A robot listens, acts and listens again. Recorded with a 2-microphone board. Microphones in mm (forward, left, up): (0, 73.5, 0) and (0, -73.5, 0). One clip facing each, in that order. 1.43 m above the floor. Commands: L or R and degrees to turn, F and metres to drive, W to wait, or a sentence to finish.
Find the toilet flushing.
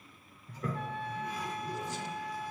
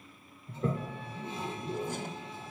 R25
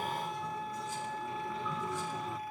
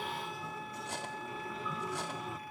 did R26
Found it: a toilet flushing, straight ahead, 1 to 2 m away.